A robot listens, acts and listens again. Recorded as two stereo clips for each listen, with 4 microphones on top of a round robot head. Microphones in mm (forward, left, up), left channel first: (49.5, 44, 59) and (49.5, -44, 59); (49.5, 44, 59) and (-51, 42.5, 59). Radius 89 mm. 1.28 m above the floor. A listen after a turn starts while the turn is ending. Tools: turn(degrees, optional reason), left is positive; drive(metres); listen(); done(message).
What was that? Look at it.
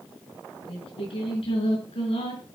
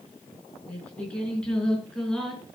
turn(degrees=85, reason="The singing: 85° left.")
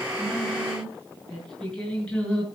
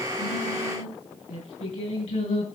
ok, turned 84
turn(degrees=10, reason="The singing is now 10° left.")
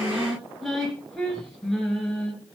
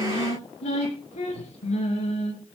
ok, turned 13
done("Found it: singing, straight ahead.")